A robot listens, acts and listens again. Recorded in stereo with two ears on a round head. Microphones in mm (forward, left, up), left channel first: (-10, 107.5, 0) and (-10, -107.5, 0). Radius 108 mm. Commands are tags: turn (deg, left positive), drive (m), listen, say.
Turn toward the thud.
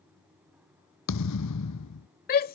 <turn deg="90"/>
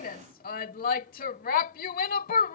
<say>I heard a thud from this way, but can't make it out now.</say>